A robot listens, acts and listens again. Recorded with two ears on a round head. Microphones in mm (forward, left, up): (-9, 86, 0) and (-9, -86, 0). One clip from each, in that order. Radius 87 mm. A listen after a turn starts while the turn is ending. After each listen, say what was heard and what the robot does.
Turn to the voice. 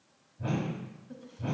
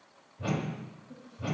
The woman speaking: about 35° left or 145° left. Turn 35° left.
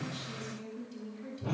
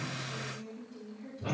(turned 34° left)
So it is at 120° left. Turn 120° left.
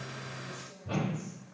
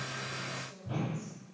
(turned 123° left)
Facing the woman speaking, 2 to 4 m away.